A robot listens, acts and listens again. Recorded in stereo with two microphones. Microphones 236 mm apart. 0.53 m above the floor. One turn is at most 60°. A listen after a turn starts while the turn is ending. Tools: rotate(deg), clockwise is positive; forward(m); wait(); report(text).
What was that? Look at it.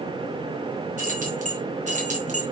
rotate(30)
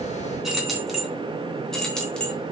report("Found it: keys jangling, straight ahead, 2 to 4 m away.")